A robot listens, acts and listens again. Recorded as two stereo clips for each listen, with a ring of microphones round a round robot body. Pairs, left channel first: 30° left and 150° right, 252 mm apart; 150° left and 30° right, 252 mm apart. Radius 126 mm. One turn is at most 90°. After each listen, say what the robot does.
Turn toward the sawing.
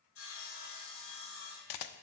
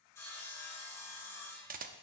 Turn 70° left.
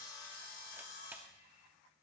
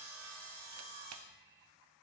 Turn 25° right.
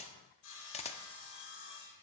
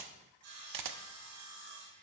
Facing the sawing, 2 to 4 m away.